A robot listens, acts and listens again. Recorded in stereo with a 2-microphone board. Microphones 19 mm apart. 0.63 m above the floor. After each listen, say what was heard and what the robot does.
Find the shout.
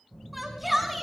Turn 30° right.
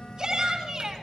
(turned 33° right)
So it is at 135° right. Turn 135° right.
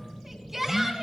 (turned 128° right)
The shout is now 10° right. Turn 10° right.
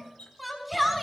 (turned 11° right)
Found it: a shout, straight ahead.